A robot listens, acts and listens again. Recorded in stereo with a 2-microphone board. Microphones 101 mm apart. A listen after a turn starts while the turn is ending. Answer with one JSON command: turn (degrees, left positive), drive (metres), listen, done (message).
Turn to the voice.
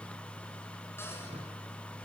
{"listen": true}
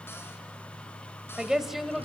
{"turn": 30}
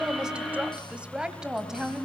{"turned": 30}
{"turn": -30}
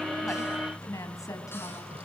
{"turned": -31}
{"turn": 35}
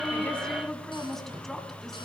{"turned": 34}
{"done": "Facing the woman speaking."}